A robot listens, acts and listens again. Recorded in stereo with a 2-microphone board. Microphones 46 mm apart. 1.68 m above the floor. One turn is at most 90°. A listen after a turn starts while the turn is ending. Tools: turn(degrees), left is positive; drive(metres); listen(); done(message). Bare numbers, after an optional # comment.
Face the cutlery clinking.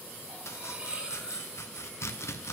# The cutlery clinking: about 30° right or 150° right.
turn(-30)
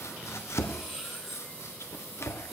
done("Found it: cutlery clinking, straight ahead, 2 to 4 m away.")